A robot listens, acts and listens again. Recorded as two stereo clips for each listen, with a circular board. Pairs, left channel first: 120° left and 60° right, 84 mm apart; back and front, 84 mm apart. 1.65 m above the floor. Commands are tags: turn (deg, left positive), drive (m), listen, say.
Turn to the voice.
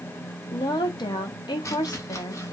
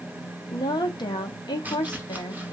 <turn deg="150"/>
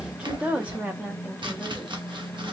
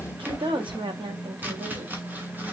<turn deg="15"/>
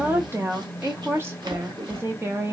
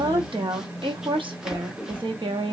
<say>Facing the woman speaking.</say>